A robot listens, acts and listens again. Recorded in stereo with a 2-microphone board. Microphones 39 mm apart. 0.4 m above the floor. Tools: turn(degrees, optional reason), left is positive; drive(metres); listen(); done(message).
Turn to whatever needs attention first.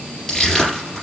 listen()
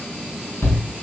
turn(degrees=65, reason="The shout: about 65° left or 115° left.")
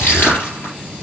listen()
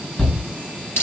turn(degrees=10, reason="So it is at 10° left.")
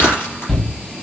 done("Found it: a shout, straight ahead, 2 to 4 m away.")